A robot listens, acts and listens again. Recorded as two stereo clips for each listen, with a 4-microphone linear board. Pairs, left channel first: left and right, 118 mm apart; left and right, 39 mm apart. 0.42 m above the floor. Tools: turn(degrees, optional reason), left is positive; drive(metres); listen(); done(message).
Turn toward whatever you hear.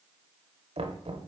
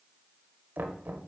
turn(degrees=-65, reason="The knocking: about 65° right or 115° right.")
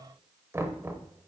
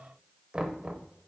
turn(degrees=-25, reason="So it is at 25° right.")
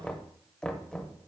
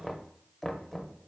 turn(degrees=10, reason="The knocking is now 10° left.")
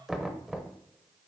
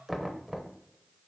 done("Found it: knocking, straight ahead, under 1 m away.")